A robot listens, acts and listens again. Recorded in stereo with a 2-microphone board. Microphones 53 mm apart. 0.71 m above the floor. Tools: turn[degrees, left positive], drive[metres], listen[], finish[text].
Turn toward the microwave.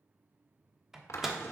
Action: turn[-30]
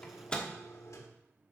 Thought: So it is at 20° left.
Action: turn[20]
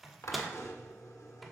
Action: finish[Facing the microwave, 1 to 2 m away.]